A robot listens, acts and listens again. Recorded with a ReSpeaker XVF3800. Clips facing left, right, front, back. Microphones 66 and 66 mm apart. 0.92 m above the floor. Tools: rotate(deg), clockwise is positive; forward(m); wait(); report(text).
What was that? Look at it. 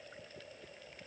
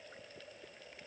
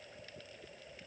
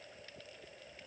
wait()
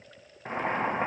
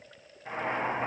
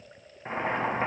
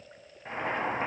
rotate(-65)
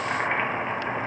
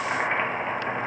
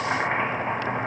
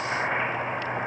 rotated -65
report("Found it: boiling, straight ahead, 1 to 2 m away.")